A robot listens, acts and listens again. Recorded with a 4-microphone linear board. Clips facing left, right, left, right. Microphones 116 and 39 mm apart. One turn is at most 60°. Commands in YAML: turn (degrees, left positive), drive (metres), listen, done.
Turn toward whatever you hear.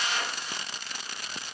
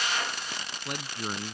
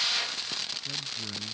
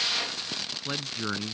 turn: -60
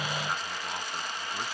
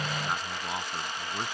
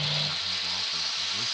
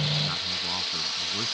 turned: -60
listen: true
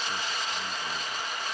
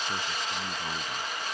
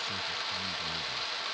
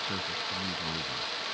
listen: true
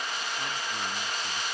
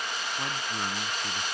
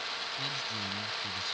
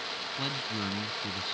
done: "I heard a man speaking, but can't make it out now. It was about 15° right or 45° right."